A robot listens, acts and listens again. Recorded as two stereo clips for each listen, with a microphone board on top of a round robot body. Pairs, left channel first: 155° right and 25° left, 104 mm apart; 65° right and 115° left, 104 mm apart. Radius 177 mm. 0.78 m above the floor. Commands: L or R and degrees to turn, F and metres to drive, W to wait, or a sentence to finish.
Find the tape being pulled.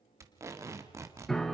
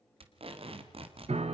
L85
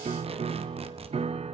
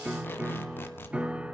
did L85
Found it: tape being pulled, straight ahead.